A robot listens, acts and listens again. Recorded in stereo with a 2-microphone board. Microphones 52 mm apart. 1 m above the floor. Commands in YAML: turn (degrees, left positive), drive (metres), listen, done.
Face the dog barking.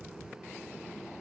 listen: true
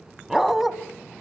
turn: -30
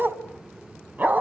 turn: -145
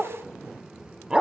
turn: -15
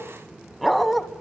done: "Facing the dog barking."